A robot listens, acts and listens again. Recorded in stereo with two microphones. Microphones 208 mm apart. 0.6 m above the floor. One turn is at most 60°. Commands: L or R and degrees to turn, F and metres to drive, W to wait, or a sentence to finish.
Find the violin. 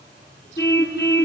W
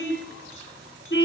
W
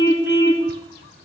I can't make out a violin, only a car horn.